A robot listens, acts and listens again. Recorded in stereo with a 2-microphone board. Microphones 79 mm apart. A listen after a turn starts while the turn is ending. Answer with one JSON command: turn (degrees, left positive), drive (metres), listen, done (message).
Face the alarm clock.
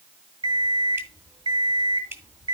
{"turn": -65}
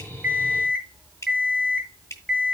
{"done": "Facing the alarm clock, 2 to 4 m away."}